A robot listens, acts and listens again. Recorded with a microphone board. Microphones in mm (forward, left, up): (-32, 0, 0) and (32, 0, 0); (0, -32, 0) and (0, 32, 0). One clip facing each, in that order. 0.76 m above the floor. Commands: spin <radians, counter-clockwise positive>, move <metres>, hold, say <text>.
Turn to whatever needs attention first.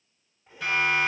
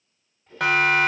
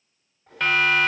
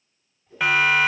spin 0.17
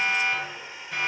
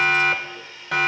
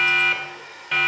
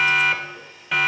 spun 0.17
say Facing the siren, 2 to 4 m away.